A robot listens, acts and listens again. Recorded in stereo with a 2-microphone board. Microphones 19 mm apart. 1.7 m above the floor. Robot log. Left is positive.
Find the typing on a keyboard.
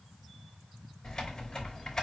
note: The typing on a keyboard: about 25° left or 155° left.
cmd yaw +25
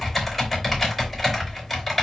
end: Found it: typing on a keyboard, straight ahead.